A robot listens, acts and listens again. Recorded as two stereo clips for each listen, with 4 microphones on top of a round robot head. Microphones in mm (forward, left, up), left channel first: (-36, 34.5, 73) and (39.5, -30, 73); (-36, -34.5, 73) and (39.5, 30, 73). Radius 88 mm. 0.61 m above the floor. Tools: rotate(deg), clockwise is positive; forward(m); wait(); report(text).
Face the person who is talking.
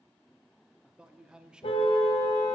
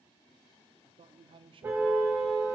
rotate(-40)
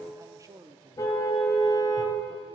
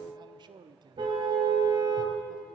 rotate(-10)
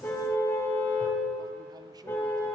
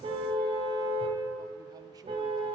wait()
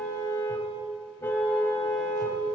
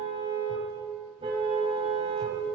wait()
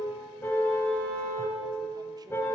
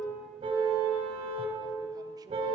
report("Facing where the man speaking came from. I can't hear it now.")